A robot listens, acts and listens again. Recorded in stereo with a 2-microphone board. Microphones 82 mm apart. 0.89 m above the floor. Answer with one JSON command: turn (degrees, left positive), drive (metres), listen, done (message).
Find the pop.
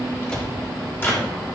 {"listen": true}
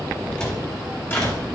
{"listen": true}
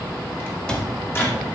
{"done": "I can't make out a pop to turn to."}